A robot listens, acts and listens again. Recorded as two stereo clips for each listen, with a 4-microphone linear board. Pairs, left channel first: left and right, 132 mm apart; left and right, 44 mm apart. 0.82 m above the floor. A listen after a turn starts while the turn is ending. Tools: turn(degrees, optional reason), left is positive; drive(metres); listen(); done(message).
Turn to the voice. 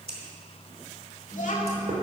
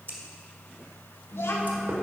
turn(degrees=75, reason="The child speaking: about 75° left or 105° left.")
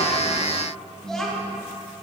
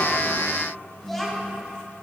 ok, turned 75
done("Facing the child speaking, 1 to 2 m away.")